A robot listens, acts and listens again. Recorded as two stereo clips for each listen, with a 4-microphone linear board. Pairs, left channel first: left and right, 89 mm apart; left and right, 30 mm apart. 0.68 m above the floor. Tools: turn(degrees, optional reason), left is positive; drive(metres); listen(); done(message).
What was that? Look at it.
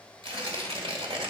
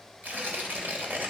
turn(degrees=-90)
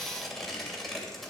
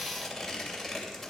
done("Facing the tearing paper, 2 to 4 m away.")